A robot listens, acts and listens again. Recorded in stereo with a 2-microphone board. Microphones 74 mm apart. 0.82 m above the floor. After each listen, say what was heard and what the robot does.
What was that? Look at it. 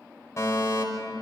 The fire alarm: about 40° left or 140° left. Turn 40° left.
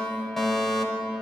Facing the fire alarm, over 4 m away.